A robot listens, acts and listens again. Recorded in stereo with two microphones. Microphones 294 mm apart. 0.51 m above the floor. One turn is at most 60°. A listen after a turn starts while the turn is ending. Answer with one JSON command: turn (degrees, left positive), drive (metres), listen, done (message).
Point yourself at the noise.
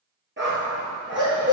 {"turn": -40}
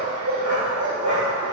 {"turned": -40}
{"turn": -60}
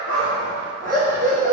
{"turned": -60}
{"turn": -30}
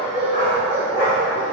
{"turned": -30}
{"turn": 10}
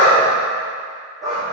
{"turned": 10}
{"done": "Found it: a dog barking, straight ahead."}